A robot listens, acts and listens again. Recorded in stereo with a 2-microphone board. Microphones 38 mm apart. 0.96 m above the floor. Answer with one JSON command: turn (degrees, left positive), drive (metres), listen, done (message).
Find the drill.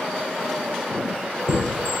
{"listen": true}
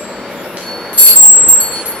{"listen": true}
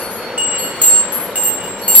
{"done": "I can't make out a drill to turn to."}